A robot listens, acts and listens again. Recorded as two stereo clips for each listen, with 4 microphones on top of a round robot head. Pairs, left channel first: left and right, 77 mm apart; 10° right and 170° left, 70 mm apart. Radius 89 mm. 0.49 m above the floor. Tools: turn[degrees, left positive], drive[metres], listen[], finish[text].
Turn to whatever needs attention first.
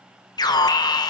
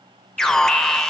Thought: The alarm: 70° left.
Action: turn[70]
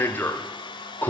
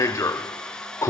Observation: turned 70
Thought: The alarm is now 30° left.
Action: turn[30]
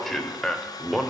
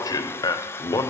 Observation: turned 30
Action: finish[Found it: an alarm, straight ahead.]